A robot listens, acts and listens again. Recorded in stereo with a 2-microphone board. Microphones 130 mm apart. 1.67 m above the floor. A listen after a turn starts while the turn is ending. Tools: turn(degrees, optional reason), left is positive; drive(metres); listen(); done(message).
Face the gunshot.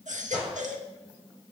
turn(degrees=-30)
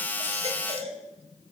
listen()
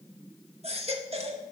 done("I heard a gunshot, but can't make it out now. It was about 20° left or 140° right.")